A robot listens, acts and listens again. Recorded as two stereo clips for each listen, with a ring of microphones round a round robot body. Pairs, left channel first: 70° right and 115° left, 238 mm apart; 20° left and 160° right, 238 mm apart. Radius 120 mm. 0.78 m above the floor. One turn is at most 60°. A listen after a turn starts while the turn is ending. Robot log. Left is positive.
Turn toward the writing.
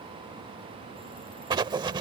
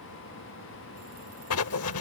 note: The writing: 40° left.
cmd yaw +40
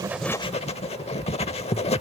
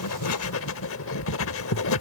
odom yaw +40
end: Found it: writing, straight ahead.